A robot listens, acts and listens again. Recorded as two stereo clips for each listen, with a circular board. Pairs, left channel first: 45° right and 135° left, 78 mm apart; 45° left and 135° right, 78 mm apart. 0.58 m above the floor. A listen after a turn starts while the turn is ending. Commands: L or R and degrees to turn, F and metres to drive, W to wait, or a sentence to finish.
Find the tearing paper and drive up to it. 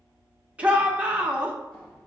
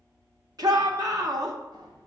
W
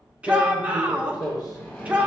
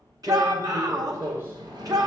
R75
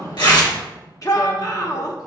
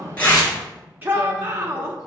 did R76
W
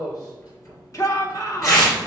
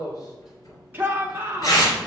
F1.0
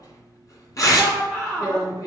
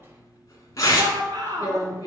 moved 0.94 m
F1.0
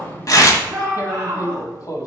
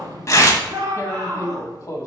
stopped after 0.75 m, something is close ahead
I am next to the tearing paper.